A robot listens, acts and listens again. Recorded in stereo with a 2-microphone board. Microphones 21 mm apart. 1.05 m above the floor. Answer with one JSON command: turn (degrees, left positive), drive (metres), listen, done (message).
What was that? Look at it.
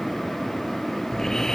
{"turn": 25}
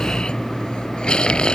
{"turn": 135}
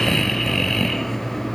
{"turn": 15}
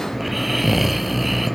{"done": "Found it: snoring, straight ahead."}